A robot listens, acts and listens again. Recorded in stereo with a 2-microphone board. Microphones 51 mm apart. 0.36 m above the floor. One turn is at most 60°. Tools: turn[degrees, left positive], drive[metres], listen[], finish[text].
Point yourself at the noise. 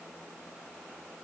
Action: listen[]
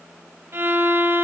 Thought: The violin: about 50° right or 130° right.
Action: turn[-50]
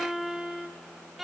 Action: finish[Found it: a violin, straight ahead.]